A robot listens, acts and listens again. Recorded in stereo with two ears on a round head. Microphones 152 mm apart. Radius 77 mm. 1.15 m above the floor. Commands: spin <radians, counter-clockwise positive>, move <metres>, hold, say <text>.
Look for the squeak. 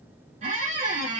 spin -0.79
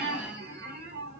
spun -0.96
spin -1.31
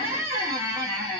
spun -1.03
spin -0.26
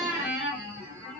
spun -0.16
spin -0.17
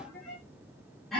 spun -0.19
say Facing the squeak, 1 to 2 m away.